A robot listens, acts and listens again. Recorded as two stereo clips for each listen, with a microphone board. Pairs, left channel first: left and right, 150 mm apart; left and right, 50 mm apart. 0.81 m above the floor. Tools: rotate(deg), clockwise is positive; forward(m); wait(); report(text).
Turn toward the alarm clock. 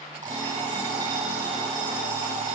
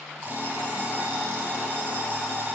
rotate(55)
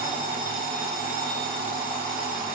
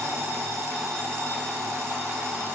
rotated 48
rotate(80)
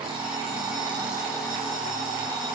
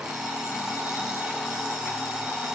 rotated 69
report("Found it: an alarm clock, straight ahead.")